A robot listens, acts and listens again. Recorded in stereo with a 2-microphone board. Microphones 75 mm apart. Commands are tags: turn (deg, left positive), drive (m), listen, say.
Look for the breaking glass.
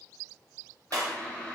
<turn deg="-55"/>
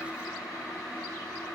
<listen/>
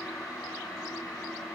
<say>I heard breaking glass, but can't make it out now. It was about straight ahead or 70° right.</say>